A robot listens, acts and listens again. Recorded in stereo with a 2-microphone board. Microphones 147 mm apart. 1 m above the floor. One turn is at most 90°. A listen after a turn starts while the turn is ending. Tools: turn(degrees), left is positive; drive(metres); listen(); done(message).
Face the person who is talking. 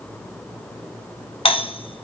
listen()
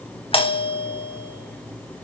listen()
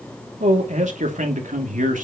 turn(degrees=-65)
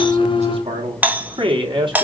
turn(degrees=-35)
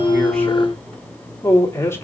turn(degrees=20)
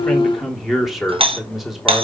done("Facing the man speaking, 2 to 4 m away.")